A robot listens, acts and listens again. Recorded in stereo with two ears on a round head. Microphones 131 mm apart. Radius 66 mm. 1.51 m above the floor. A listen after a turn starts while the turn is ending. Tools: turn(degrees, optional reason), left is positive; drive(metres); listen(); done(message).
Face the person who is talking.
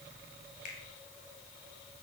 listen()
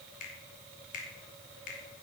listen()
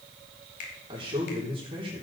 turn(degrees=-35, reason="The man speaking: about 35° right or 145° right.")
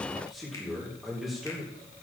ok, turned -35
done("Facing the man speaking, 2 to 4 m away.")